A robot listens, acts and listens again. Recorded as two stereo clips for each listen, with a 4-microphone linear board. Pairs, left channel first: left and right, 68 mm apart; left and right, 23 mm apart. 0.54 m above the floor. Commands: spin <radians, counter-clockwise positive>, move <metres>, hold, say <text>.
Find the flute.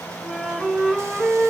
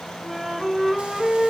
spin -0.52
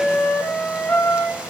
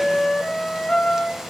spin 0.35
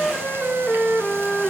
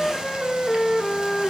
say Facing the flute.